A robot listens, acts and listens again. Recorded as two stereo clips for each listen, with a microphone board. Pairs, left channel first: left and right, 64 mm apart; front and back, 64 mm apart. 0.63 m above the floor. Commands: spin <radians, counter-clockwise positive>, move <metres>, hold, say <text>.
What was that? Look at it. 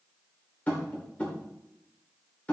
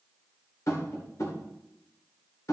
spin 0.44
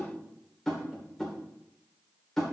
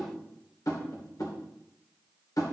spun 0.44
spin 0.17
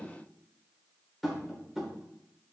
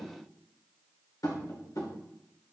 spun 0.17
say Facing the tapping, 2 to 4 m away.